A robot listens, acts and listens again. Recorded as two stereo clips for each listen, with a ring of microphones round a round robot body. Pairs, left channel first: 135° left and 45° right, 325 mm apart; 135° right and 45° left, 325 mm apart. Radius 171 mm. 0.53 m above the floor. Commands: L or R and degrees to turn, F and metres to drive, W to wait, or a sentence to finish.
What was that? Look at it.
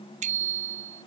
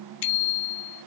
R115
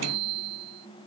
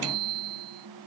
Found it: a bicycle bell, straight ahead.